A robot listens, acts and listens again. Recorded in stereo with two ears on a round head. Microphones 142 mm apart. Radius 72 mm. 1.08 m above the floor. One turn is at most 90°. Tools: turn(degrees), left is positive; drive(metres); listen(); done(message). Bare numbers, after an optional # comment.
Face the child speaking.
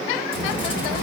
turn(90)
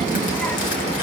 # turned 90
done("Facing the child speaking, 1 to 2 m away.")